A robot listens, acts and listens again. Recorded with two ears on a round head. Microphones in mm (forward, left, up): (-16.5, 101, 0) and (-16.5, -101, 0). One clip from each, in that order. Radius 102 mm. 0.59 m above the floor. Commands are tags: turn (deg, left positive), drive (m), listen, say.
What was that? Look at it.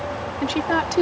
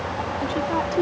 <turn deg="50"/>
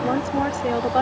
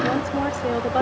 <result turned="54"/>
<say>Found it: a woman speaking, straight ahead.</say>